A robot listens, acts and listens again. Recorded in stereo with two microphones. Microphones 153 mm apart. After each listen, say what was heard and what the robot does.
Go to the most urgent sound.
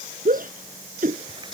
The shout: about 65° right or 115° right. Turn 65° right.
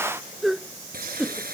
Drive 1.0 m forward.
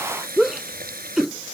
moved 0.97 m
Drive 1.0 m forward.
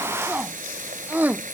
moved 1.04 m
The shout is now 10° right. Turn 10° right.
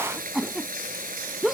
Drive 1.0 m forward.
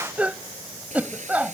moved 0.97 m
The shout is now 10° right. Turn 10° right.
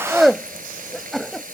Drive 1.0 m forward.
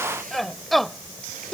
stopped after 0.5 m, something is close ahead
I am next to the shout.